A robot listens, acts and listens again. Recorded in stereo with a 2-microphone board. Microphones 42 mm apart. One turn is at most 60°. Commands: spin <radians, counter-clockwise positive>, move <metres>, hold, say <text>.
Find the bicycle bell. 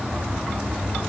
hold
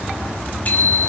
spin 0.70
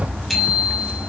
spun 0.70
say Found it: a bicycle bell, straight ahead, over 4 m away.